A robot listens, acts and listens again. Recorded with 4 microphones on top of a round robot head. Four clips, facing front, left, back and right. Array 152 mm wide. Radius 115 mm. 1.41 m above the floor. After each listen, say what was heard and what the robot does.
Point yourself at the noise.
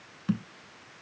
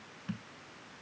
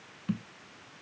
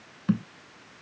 The thud: 80° right. Turn 80° right.
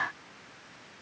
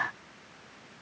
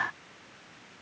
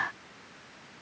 Facing where the thud came from. I can't hear it now.